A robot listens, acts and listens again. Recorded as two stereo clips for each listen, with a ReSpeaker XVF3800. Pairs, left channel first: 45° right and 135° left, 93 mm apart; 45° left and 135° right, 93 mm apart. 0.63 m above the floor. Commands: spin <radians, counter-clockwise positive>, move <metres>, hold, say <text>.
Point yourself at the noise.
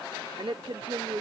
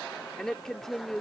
spin 2.27
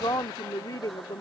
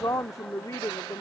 say Found it: a woman speaking, straight ahead.